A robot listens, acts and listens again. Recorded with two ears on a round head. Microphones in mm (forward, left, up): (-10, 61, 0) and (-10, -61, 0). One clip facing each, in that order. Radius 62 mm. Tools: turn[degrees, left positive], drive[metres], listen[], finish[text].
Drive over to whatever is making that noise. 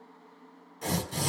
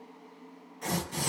Thought: The tearing paper: about 40° left or 140° left.
Action: turn[40]
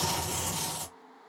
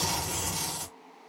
Action: drive[1.0]
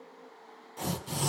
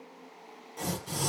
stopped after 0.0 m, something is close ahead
Action: finish[Something is in my way. I am facing the tearing paper but have not reached it.]